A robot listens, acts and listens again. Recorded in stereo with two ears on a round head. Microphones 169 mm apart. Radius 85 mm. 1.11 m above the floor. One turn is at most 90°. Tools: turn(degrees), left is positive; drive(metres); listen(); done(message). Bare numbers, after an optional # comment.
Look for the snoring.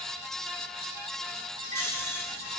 turn(30)
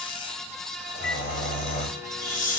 # So it is at 135° left.
turn(90)
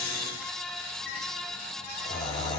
# The snoring is now 20° left.
turn(20)
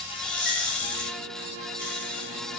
done("Facing the snoring, 2 to 4 m away.")